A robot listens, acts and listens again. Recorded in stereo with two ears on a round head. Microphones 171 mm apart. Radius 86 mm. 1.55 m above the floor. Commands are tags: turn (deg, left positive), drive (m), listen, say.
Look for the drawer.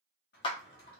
<turn deg="55"/>
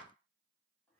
<listen/>
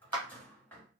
<turn deg="10"/>
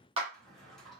<say>Facing the drawer, 1 to 2 m away.</say>